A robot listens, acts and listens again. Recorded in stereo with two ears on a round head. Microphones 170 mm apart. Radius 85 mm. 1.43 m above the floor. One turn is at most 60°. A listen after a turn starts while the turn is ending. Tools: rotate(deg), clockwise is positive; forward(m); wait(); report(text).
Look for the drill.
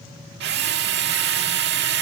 rotate(60)
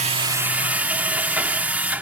rotate(10)
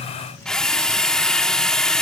report("Found it: a drill, straight ahead.")